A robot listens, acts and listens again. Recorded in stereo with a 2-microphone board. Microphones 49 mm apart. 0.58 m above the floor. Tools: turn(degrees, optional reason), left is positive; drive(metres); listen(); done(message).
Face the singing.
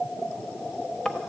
listen()
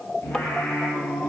turn(degrees=90)
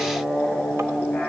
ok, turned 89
turn(degrees=10, reason="So it is at 10° left.")
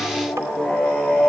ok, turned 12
done("Found it: singing, straight ahead.")